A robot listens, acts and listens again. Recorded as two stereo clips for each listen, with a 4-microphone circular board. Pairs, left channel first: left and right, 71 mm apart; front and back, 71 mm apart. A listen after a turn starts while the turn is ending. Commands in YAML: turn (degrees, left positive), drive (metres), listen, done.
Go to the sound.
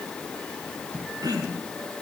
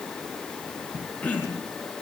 turn: -70
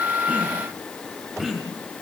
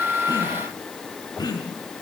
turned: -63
drive: 1.0
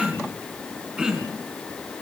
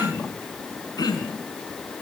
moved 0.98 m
turn: -10
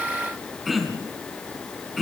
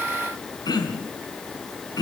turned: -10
drive: 1.0
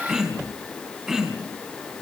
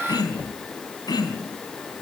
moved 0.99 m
drive: 1.0
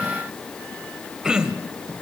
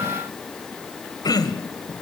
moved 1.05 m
turn: -10
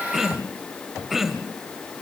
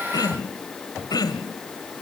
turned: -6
drive: 1.0
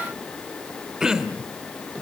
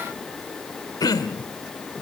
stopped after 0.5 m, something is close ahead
turn: -10
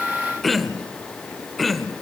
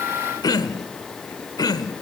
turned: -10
done: "Arrived at the throat clearing, straight ahead."